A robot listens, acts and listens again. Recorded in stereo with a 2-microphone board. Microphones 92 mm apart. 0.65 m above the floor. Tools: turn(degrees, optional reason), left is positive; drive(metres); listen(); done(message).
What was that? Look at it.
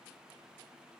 listen()
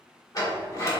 turn(degrees=35, reason="The sliding door: about 35° left or 145° left.")
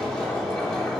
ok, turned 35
turn(degrees=10, reason="So it is at 10° left.")
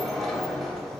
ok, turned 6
done("Found it: a sliding door, straight ahead, 2 to 4 m away.")